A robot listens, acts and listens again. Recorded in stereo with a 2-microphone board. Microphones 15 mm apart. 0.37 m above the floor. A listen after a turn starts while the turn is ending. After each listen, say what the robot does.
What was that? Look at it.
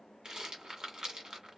Turn 55° right.
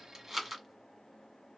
Found it: a rattle, straight ahead, 1 to 2 m away.